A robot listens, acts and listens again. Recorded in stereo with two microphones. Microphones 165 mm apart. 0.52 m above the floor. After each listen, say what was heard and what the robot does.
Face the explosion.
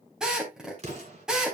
The explosion: about 45° right or 135° right. Turn 45° right.
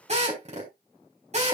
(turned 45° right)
Keep listening.
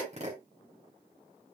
I heard an explosion, but can't make it out now. It was about straight ahead or 90° right.